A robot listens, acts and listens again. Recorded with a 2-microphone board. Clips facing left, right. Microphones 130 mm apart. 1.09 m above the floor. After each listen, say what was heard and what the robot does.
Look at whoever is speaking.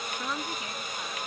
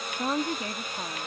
The woman speaking: about 45° right or 135° right. Turn 45° right.
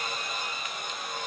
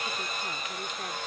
Keep listening.
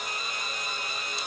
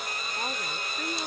Keep listening.
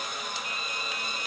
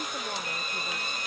I heard a woman speaking, but can't make it out now. It was about straight ahead or 90° right.